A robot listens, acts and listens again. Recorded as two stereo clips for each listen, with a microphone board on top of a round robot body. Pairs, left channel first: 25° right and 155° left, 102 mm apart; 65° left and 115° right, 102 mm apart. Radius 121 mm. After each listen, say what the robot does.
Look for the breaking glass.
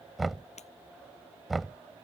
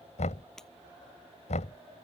Turn 20° right.
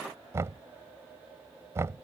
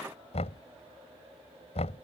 I heard breaking glass from this way, but can't make it out now.